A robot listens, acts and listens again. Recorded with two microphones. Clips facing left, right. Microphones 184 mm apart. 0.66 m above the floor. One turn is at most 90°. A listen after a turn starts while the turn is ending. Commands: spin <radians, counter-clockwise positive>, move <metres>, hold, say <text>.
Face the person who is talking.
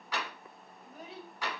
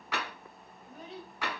spin 0.52
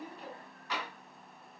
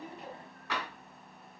spin 1.57
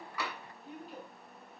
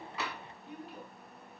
spin 0.70
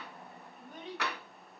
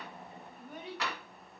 spin -0.17
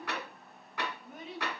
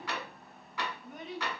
say Facing the child speaking.